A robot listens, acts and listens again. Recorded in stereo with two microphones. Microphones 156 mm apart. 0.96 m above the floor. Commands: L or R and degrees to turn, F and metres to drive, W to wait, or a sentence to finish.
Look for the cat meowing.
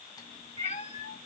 L45
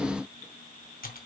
W
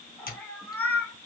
L10
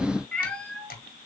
L10
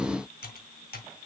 W
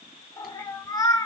L25
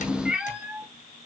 Facing the cat meowing, 1 to 2 m away.